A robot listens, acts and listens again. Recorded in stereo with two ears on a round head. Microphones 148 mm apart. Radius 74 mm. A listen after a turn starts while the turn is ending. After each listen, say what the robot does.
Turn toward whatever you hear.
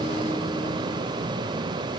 Keep listening.
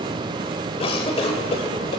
Turn 40° left.
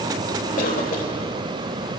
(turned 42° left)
Keep listening.
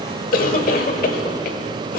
Turn 90° left.
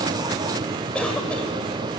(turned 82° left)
Turn 10° left.
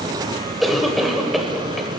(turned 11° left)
Facing the cough, 1 to 2 m away.